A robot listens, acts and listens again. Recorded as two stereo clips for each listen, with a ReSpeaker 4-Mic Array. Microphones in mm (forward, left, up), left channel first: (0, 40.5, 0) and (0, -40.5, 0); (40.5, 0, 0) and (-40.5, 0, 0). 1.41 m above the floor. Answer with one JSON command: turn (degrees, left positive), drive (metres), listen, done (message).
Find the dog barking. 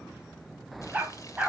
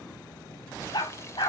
{"turn": -20}
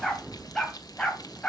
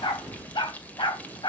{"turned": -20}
{"turn": 15}
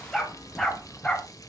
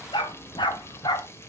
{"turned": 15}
{"turn": 10}
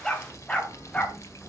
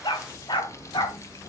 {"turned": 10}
{"turn": 15}
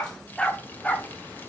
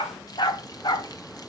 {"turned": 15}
{"turn": 10}
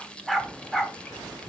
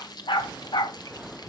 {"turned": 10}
{"done": "Found it: a dog barking, straight ahead."}